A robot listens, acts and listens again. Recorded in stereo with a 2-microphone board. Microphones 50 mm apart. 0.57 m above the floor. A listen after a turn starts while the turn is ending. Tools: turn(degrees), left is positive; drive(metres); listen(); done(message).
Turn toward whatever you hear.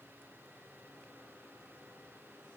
listen()
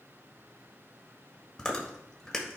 turn(degrees=30)
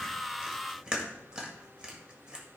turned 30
turn(degrees=-20)
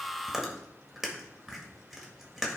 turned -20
done("Facing the chewing.")